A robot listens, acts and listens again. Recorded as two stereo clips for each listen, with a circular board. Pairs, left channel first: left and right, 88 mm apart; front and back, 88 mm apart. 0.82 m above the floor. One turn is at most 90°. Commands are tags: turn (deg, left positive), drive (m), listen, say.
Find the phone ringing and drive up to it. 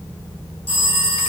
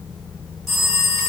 <turn deg="85"/>
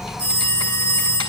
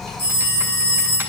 <turn deg="10"/>
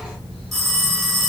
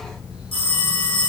<drive m="1.0"/>
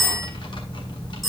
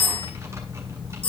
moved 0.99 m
<drive m="1.0"/>
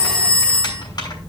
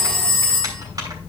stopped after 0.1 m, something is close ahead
<turn deg="10"/>
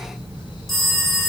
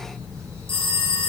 <say>Blocked. The phone ringing is further on, straight ahead.</say>